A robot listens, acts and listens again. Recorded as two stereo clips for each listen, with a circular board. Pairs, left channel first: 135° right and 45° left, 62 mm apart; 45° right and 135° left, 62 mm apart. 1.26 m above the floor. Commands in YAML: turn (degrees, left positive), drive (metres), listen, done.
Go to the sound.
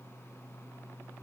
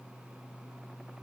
listen: true
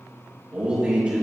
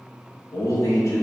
turn: -20
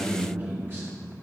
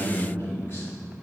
drive: 1.0
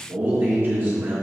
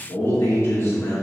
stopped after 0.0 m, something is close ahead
done: "Something is in my way. I am facing the man speaking but have not reached it."